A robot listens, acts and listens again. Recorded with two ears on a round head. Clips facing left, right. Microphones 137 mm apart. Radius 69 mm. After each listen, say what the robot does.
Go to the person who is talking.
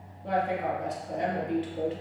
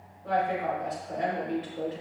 Turn 35° left.
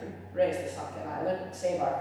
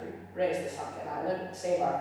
Turn 110° left.
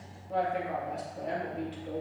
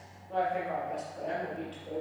Turn 10° left.
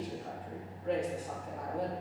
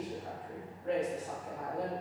Drive 1.0 m forward.
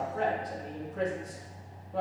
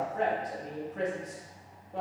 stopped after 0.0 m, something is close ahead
Something is in my way. I am facing the woman speaking but have not reached it.